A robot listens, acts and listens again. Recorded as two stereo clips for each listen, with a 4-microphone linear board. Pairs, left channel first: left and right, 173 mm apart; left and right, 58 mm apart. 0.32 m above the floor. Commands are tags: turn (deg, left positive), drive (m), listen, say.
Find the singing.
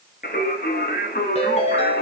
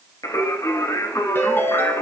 <turn deg="70"/>
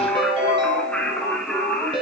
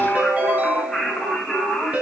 <say>Found it: singing, straight ahead.</say>